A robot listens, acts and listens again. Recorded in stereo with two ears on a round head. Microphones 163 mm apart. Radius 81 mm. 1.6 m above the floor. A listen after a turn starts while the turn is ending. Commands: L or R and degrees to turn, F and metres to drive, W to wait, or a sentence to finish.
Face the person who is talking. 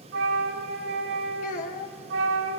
L45
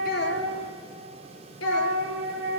L90
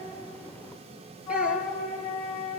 W
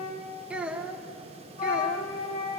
Facing the child speaking.